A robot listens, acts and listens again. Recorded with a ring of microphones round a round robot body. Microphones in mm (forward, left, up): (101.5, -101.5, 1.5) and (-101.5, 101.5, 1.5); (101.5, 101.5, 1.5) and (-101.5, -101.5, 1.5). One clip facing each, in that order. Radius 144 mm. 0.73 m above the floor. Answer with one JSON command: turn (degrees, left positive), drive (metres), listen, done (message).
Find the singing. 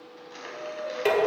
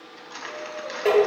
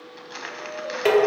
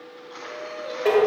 {"turn": -95}
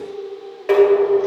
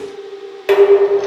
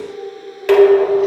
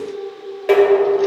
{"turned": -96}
{"turn": 20}
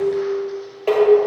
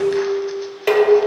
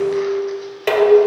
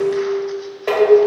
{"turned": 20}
{"listen": true}
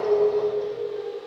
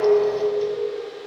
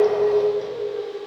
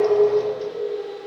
{"turn": 25}
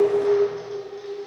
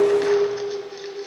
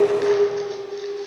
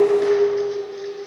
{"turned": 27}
{"listen": true}
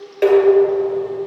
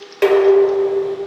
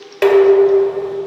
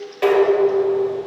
{"listen": true}
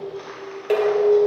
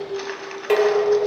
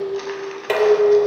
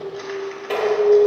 {"done": "Facing where the singing came from. I can't hear it now."}